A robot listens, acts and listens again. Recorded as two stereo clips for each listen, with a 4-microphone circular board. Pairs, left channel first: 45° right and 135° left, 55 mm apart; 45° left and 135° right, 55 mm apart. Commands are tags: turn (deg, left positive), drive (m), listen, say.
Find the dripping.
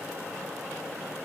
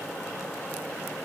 <listen/>
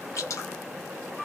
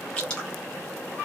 <turn deg="-30"/>
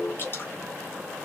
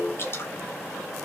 <say>Facing the dripping, 1 to 2 m away.</say>